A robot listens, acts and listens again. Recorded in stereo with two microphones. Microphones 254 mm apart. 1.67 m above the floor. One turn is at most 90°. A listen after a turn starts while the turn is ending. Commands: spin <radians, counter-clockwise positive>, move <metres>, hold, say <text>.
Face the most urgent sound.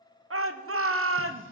spin -1.05
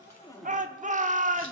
spin -0.61
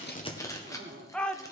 say Facing the shout.